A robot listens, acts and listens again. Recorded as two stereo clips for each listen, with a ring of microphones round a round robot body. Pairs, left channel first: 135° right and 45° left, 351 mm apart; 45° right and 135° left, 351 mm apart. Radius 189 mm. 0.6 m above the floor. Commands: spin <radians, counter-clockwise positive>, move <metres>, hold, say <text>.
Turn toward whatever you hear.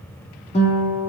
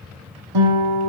spin 2.71
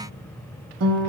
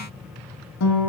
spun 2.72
say Facing the guitar.